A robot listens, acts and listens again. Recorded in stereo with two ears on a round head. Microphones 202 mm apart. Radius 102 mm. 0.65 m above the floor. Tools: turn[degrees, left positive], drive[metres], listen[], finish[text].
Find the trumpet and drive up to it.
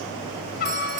Thought: The trumpet: about 45° left or 135° left.
Action: turn[45]
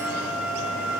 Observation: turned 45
Action: drive[1.0]
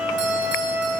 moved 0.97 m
Action: drive[1.0]
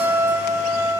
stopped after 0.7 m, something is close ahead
Thought: The trumpet is now 10° right.
Action: turn[-10]
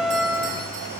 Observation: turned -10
Action: finish[Arrived at the trumpet, straight ahead.]